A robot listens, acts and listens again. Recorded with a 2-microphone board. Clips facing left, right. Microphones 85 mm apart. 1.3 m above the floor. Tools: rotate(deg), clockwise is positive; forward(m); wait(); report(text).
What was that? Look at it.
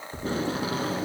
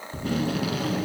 rotate(-30)
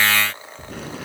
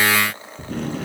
report("Found it: tape being pulled, straight ahead.")